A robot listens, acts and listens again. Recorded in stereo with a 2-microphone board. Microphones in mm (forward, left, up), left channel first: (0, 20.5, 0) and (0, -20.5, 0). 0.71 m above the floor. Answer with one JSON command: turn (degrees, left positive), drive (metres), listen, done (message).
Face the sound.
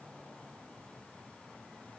{"listen": true}
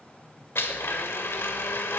{"turn": 90}
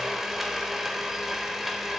{"turn": -10}
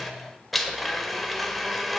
{"done": "Facing the blender, 1 to 2 m away."}